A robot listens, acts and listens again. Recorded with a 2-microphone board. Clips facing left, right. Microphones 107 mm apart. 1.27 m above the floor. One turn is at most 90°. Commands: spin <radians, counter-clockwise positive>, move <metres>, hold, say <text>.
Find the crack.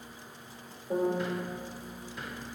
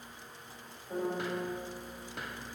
hold
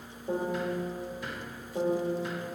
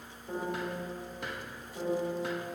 hold
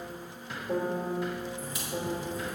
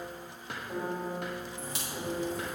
spin -1.31
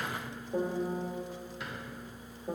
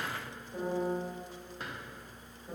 hold
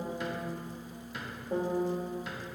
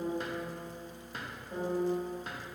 say I heard a crack, but can't make it out now. It was about straight ahead or 30° right.